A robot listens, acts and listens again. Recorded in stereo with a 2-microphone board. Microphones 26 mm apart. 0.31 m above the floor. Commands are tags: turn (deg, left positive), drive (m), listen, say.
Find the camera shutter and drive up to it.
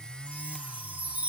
<listen/>
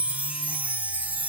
<listen/>
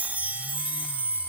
<turn deg="40"/>
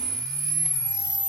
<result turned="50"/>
<drive m="1.0"/>
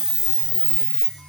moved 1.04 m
<turn deg="-10"/>
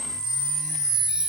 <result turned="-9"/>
<drive m="1.0"/>
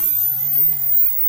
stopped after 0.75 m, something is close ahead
<say>I am next to the camera shutter.</say>